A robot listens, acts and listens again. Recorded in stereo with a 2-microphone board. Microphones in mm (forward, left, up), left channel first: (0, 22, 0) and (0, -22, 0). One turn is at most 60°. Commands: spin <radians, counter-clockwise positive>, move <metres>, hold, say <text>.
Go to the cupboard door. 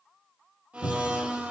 spin 1.05
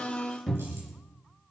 move 1.0
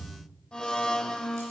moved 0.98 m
spin 0.17
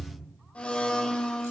move 1.0
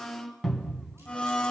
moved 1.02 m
move 1.0
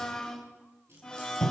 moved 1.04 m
move 1.0
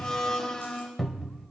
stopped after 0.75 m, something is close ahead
say I am next to the cupboard door.